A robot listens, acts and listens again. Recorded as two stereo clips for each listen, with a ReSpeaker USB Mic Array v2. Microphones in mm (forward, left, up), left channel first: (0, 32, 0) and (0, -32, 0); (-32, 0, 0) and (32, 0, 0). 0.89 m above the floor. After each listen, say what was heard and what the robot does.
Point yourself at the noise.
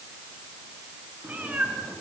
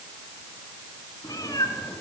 The cat meowing: 160° right. Turn 160° right.
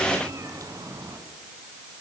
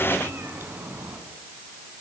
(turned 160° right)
The cat meowing is now 60° right. Turn 60° right.
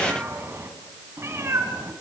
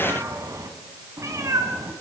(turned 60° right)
The cat meowing is now 45° right. Turn 45° right.
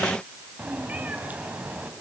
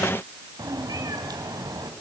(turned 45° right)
The cat meowing is now 25° right. Turn 25° right.
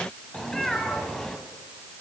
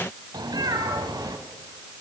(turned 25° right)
Facing the cat meowing, 2 to 4 m away.